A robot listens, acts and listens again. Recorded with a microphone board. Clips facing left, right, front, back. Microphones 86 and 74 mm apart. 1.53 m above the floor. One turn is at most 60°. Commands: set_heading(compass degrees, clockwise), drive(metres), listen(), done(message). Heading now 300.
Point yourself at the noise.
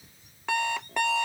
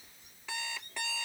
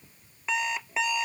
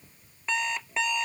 set_heading(240)
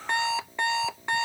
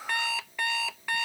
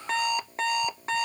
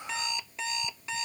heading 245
set_heading(215)
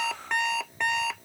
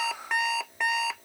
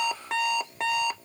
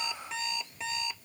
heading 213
done("Facing the alarm clock.")